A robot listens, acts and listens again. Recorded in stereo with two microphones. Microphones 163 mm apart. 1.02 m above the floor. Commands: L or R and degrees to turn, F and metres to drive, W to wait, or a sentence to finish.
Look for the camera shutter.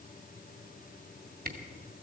R60
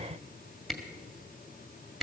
Found it: a camera shutter, straight ahead.